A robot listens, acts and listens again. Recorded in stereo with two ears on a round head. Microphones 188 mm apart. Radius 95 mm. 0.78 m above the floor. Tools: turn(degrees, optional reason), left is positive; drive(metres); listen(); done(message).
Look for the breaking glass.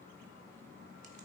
listen()
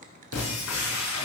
turn(degrees=70, reason="The breaking glass: about 70° left or 110° left.")
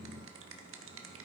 listen()
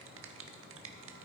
done("I heard breaking glass, but can't make it out now. It was about straight ahead or 40° left.")